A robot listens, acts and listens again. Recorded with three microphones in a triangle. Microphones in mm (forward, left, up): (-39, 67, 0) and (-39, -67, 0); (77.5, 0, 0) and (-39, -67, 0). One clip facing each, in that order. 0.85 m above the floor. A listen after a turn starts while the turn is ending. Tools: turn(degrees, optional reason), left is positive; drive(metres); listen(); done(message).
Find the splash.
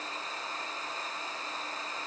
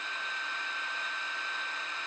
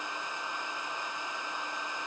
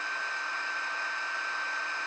listen()
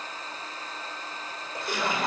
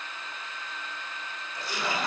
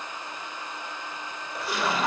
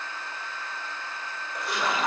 turn(degrees=120, reason="The splash: 120° left.")
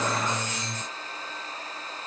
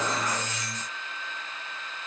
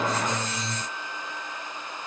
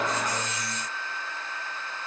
done("I heard a splash from this way, but can't make it out now.")